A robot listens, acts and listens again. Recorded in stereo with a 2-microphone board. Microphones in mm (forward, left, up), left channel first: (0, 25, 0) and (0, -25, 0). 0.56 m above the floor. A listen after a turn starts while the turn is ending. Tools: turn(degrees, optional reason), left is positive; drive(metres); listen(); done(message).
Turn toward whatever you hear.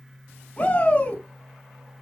turn(degrees=30, reason="The shout: about 30° left or 150° left.")
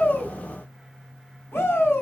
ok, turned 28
turn(degrees=120, reason="So it is at 120° left.")
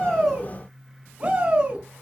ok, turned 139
turn(degrees=-20, reason="The shout is now 20° right.")
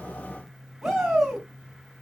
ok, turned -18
done("Facing the shout, over 4 m away.")